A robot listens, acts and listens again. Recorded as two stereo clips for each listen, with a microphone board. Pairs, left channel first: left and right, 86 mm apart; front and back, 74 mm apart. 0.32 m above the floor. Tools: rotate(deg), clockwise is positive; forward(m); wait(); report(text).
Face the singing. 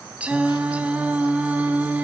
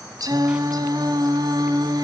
rotate(160)
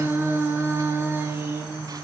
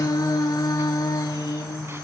rotate(30)
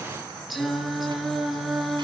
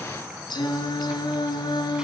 report("Facing the singing, 2 to 4 m away.")